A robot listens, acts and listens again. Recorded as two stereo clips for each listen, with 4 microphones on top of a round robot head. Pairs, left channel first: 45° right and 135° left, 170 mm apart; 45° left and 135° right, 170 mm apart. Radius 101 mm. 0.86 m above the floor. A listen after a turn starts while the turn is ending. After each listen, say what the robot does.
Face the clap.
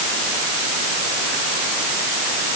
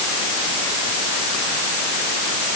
Keep listening.
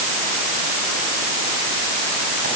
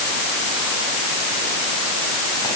Keep listening.
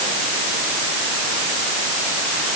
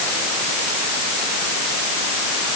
I can't make out a clap.